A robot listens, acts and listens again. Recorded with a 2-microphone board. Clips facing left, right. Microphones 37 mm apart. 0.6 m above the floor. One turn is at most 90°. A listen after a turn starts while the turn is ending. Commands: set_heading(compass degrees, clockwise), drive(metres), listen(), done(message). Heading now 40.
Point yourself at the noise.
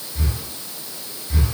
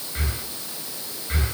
set_heading(80)
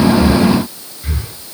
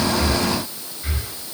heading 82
done("Found it: breathing, straight ahead.")